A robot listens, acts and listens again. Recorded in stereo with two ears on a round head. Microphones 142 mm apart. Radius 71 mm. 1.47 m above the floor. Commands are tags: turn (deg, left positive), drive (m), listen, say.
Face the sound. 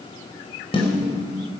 <turn deg="35"/>
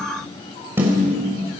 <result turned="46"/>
<turn deg="-15"/>
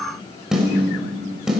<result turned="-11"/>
<say>Found it: a snare drum, straight ahead, over 4 m away.</say>